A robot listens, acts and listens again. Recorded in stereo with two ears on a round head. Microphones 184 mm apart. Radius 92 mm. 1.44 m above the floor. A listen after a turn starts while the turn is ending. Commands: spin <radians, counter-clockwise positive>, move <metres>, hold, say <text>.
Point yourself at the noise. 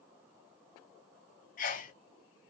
spin 0.70
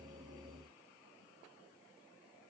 hold
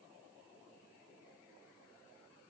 say I heard a sneeze, but can't make it out now. It was about straight ahead or 100° left.